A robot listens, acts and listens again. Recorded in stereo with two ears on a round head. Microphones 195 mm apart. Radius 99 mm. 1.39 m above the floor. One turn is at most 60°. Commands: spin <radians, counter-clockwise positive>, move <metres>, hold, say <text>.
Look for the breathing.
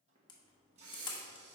spin -1.05
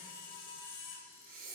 spin -0.79
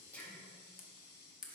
spin 0.17
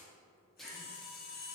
say Found it: breathing, straight ahead, 1 to 2 m away.